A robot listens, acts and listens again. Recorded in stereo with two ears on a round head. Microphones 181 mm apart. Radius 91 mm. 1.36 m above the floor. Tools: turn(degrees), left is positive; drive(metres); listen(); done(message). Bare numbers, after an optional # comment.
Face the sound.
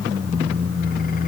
listen()
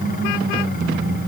listen()
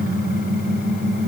done("I can't make out anything to turn to.")